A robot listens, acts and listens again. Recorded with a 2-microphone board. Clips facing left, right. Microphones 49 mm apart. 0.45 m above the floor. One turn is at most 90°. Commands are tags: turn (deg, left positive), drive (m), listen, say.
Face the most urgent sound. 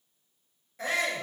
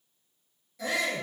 <turn deg="35"/>
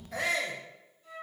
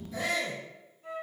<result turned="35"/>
<turn deg="90"/>
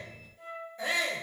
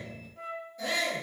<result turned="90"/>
<turn deg="30"/>
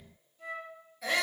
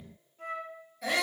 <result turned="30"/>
<say>Found it: a shout, straight ahead.</say>